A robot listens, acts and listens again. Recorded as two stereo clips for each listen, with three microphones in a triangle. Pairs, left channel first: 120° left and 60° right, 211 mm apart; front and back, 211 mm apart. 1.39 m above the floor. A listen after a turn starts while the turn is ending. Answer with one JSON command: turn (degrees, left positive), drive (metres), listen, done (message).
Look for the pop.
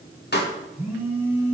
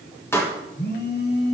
{"turn": 80}
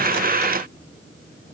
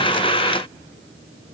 {"done": "I heard a pop from this way, but can't make it out now."}